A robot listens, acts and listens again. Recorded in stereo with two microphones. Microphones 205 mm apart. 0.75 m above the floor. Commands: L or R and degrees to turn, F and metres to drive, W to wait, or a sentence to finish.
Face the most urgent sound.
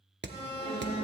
L65
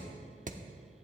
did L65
W
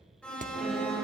Found it: an alarm, straight ahead.